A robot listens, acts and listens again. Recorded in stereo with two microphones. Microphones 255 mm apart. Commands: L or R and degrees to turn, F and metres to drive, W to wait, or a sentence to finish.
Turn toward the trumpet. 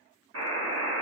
W
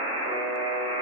W
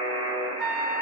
R40
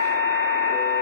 R95
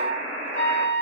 L10
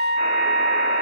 Facing the trumpet, 1 to 2 m away.